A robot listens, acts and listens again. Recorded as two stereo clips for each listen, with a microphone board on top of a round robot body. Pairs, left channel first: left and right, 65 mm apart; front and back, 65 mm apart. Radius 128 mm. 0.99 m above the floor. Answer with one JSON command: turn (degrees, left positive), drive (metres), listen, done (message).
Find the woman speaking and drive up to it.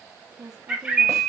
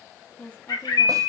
{"turn": -70}
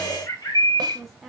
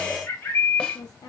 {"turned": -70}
{"drive": 1.0}
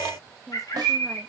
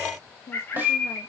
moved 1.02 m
{"drive": 1.0}
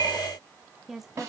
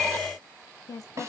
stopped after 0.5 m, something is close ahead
{"done": "Arrived at the woman speaking, straight ahead."}